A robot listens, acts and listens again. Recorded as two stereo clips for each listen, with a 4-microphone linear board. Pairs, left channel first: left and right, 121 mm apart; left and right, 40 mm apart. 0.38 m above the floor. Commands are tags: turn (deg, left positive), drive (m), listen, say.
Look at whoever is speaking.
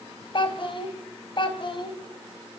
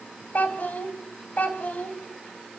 <turn deg="45"/>
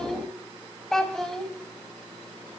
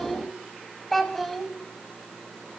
<say>Found it: a child speaking, straight ahead, 2 to 4 m away.</say>